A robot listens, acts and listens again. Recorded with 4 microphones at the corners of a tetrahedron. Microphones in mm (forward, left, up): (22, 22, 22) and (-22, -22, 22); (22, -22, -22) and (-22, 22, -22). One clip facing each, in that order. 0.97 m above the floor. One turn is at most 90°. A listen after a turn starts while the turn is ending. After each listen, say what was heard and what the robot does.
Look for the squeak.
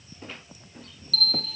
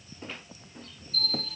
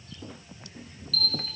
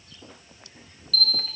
Keep listening.
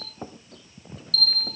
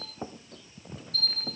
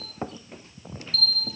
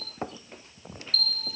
Keep listening.
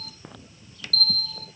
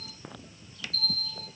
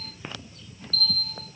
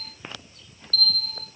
I can't make out a squeak, only a bell.